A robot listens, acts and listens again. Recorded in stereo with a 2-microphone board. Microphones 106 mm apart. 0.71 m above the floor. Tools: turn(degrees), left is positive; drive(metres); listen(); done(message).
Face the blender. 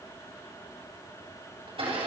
turn(degrees=-60)
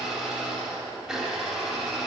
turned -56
done("Facing the blender.")